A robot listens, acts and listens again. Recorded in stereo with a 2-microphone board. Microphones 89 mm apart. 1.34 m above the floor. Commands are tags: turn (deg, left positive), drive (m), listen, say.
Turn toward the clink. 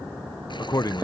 <listen/>
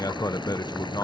<listen/>
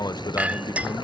<turn deg="-30"/>
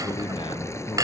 <turn deg="-135"/>
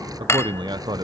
<turn deg="30"/>
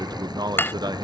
<turn deg="25"/>
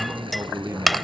<say>Facing the clink.</say>